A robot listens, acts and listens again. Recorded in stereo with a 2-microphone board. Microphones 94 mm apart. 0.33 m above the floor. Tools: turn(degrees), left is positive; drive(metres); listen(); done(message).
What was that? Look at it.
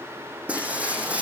turn(degrees=-30)
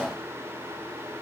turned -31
listen()
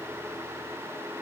done("I heard breaking glass, but can't make it out now. It was about 20° left or 135° right.")